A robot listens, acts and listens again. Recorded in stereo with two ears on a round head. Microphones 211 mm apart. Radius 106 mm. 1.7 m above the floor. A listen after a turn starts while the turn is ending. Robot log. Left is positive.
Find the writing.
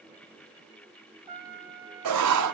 cmd yaw -90
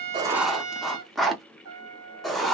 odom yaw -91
end: Found it: writing, straight ahead.